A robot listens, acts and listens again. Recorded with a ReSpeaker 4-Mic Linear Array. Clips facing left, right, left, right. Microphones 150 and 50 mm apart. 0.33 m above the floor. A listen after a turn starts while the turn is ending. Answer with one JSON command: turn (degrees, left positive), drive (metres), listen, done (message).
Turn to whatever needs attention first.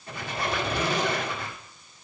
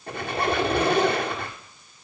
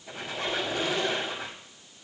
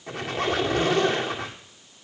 {"listen": true}
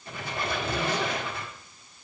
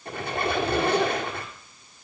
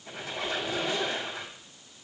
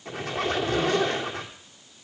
{"listen": true}
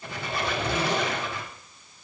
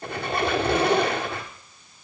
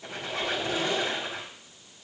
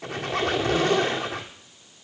{"done": "I can't make out anything urgent, only a squeak."}